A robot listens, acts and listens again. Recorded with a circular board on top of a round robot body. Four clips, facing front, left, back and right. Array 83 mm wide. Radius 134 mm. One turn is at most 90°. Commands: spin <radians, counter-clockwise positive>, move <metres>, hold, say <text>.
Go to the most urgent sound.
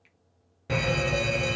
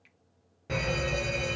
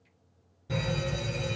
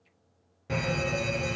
move 1.0
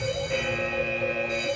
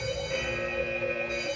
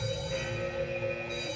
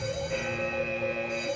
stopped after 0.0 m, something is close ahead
spin 0.17
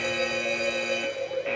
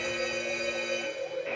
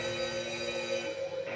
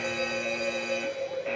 say Something is in my way. I am facing the fire alarm but have not reached it.